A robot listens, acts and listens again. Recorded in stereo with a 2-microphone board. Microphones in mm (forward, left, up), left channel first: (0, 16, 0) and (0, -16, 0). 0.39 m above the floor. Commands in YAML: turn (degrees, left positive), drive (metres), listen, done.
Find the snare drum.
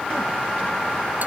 listen: true
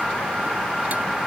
listen: true
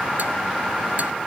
done: "I can't make out a snare drum."